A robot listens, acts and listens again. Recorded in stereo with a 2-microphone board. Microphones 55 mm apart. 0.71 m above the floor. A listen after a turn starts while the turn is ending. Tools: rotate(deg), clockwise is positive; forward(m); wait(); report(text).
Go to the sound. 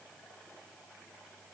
wait()
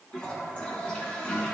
rotate(-20)
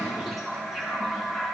forward(1.0)
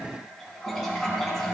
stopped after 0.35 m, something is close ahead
report("Blocked. The toilet flushing is further on, straight ahead.")